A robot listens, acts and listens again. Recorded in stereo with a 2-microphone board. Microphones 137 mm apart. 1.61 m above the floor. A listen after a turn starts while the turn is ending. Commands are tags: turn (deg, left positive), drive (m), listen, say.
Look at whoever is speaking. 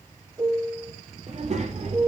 <turn deg="-50"/>
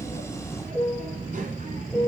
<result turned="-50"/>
<turn deg="-75"/>
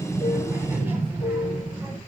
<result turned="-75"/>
<turn deg="-15"/>
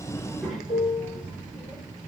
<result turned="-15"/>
<say>Facing the child speaking.</say>